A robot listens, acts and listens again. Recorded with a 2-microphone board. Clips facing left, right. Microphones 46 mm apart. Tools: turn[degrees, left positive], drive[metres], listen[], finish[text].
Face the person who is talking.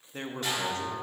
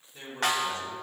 Thought: The man speaking: about 50° left or 130° left.
Action: turn[50]
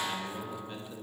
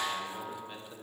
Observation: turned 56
Action: finish[Facing the man speaking.]